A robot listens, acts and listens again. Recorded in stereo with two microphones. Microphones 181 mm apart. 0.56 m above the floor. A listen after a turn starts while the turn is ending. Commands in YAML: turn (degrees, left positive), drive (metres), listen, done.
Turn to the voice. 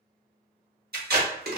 listen: true
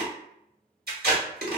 listen: true
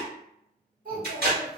turn: -55
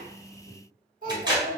turn: -60
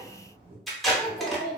turn: -35
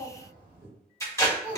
turn: -15
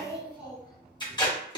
done: "Found it: a child speaking, straight ahead."